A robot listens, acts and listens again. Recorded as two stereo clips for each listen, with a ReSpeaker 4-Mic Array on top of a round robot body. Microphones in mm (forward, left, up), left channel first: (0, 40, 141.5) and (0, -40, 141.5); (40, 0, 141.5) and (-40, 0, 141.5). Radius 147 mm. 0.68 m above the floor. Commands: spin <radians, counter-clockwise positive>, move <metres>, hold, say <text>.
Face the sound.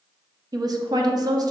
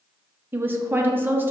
spin -2.09
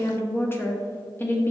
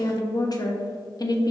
spin 0.52
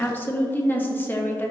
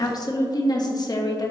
spin 0.44
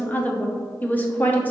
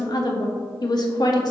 spin 0.44
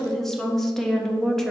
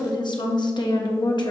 say Found it: a woman speaking, straight ahead, 1 to 2 m away.